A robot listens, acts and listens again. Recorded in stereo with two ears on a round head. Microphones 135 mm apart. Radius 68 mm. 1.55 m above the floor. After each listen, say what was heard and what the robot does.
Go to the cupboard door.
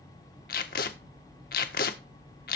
Keep listening.
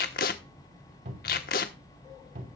The cupboard door: about 55° right or 125° right. Turn 55° right.
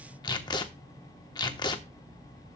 Keep listening.
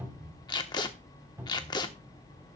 So it is at 15° right. Turn 15° right.
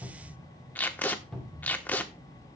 Drive 1.0 m forward.
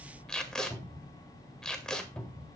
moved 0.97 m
The cupboard door is now 10° left. Turn 10° left.
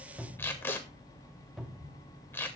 Drive 1.0 m forward.
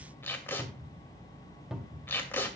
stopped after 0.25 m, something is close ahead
Arrived at the cupboard door, straight ahead.